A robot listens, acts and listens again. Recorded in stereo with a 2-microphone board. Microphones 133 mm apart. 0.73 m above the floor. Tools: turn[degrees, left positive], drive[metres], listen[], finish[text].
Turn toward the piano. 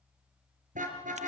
Action: listen[]
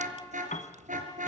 Thought: The piano: about 75° left or 105° left.
Action: turn[75]
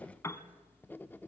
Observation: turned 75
Thought: So it is at 20° left.
Action: turn[20]
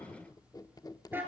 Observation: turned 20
Action: listen[]
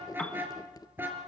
Thought: The piano is now 10° left.
Action: turn[10]
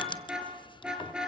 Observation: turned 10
Action: listen[]
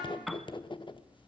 Action: finish[Found it: a piano, straight ahead, 1 to 2 m away.]